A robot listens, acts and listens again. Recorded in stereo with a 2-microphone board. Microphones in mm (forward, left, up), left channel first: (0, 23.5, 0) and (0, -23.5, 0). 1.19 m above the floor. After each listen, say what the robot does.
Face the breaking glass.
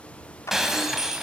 Turn 30° right.
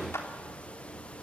Keep listening.
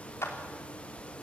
I heard breaking glass, but can't make it out now. It was about 20° left or 140° right.